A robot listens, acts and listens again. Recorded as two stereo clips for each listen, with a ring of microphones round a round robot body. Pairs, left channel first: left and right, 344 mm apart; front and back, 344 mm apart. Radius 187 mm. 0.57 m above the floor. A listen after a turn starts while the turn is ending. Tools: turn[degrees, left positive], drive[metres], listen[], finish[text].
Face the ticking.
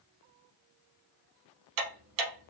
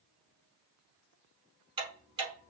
Thought: The ticking: 105° right.
Action: turn[-105]
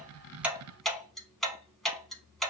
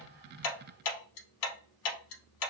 Action: finish[Found it: ticking, straight ahead, under 1 m away.]